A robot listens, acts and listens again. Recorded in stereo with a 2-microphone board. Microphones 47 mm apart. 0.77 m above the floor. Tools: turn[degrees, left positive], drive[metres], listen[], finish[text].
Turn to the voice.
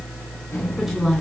Action: turn[-30]
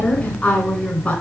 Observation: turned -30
Thought: So it is at 25° left.
Action: turn[25]
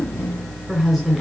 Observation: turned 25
Action: finish[Facing the woman speaking.]